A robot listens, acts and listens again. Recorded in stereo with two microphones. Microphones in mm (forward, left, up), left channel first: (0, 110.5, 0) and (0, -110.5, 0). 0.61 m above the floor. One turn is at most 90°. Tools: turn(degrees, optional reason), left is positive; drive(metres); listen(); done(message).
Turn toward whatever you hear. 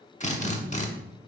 turn(degrees=35, reason="The drill: about 35° left or 145° left.")
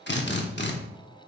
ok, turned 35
turn(degrees=90, reason="So it is at 105° left.")
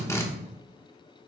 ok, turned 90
turn(degrees=15, reason="The drill is now 15° left.")
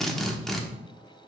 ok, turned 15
done("Found it: a drill, straight ahead, under 1 m away.")